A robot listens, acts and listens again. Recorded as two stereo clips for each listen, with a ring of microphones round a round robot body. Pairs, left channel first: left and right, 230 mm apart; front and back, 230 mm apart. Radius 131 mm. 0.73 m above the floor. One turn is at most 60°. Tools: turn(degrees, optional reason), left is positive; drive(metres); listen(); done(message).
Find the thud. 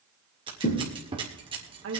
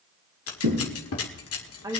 turn(degrees=60, reason="The thud: 140° left.")
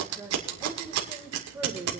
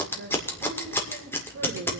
turn(degrees=60, reason="Nothing new. It was at 80° left.")
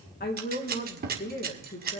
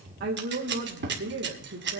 turn(degrees=20, reason="Nothing new. It was at 20° left.")
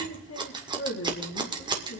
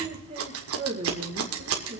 done("I heard a thud from this way, but can't make it out now.")